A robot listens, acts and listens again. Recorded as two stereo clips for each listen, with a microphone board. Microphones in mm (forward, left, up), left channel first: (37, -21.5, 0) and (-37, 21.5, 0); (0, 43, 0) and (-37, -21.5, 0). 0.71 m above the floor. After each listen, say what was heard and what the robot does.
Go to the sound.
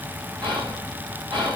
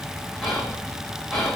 The whispering: 140° left. Turn 140° left.
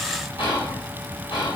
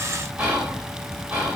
The whispering is now 45° right. Turn 45° right.
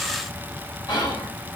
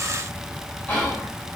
The whispering is now 10° right. Turn 10° right.
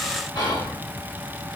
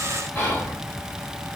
Drive 1.0 m forward.
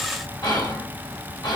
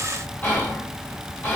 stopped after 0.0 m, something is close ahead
Something is in my way. I am facing the whispering but have not reached it.